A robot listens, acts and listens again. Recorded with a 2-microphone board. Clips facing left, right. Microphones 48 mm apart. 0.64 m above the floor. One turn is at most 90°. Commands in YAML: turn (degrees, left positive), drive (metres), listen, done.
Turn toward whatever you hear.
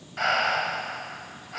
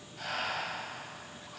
turn: 90
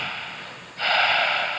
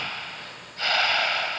turn: 10
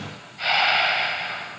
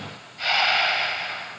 done: "Found it: breathing, straight ahead, 1 to 2 m away."